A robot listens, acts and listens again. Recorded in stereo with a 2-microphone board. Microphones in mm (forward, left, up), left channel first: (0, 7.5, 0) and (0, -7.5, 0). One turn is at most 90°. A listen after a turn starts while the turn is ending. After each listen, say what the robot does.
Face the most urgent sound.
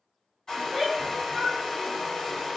Turn 30° left.
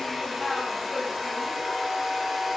Turn 90° left.
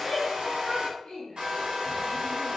Turn 60° left.
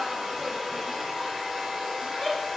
Found it: a shout, straight ahead, 1 to 2 m away.